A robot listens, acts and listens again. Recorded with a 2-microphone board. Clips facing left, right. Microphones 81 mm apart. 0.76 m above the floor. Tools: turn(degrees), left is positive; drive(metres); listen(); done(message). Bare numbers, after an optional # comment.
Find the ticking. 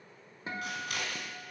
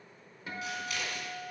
listen()
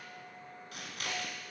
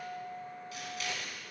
listen()
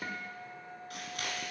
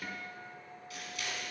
done("I can't make out ticking, only a guitar and scissors.")